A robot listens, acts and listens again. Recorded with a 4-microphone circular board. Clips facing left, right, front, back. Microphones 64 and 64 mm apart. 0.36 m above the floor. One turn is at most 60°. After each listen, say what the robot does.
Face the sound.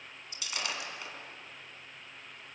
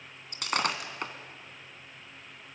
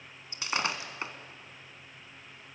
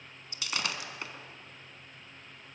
Turn 60° right.
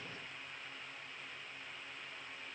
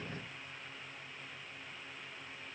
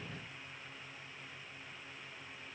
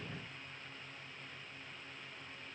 Facing where the breaking glass came from. I can't hear it now.